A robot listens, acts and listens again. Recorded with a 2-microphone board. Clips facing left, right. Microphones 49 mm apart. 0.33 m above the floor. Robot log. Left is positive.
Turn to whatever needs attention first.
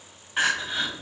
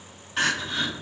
note: The crying: about 15° left or 165° left.
cmd yaw +15
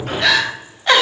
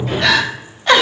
end: Found it: crying, straight ahead, 1 to 2 m away.